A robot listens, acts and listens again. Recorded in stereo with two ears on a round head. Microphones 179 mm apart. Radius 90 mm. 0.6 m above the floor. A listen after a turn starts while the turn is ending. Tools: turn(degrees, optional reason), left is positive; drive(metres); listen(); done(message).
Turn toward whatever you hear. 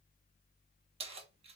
turn(degrees=-30, reason="The keys jangling: about 30° right or 150° right.")
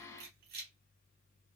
turn(degrees=-115, reason="So it is at 115° right.")
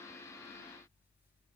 listen()
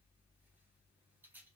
turn(degrees=-10, reason="The keys jangling is now 10° right.")
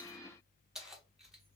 done("Found it: keys jangling, straight ahead, under 1 m away.")